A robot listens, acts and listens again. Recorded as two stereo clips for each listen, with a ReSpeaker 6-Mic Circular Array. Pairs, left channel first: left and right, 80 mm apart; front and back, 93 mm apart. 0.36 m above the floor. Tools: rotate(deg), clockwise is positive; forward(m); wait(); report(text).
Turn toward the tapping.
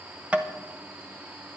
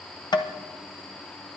rotate(20)
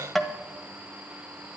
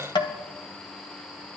report("Facing the tapping.")